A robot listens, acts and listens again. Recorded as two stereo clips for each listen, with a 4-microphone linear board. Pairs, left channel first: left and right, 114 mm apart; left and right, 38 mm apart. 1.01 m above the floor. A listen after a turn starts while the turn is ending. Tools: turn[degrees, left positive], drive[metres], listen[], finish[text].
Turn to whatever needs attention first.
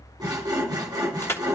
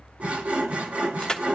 Action: listen[]
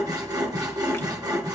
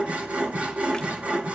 Action: listen[]
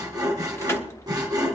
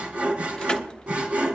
Action: finish[I can't make out anything urgent to turn to.]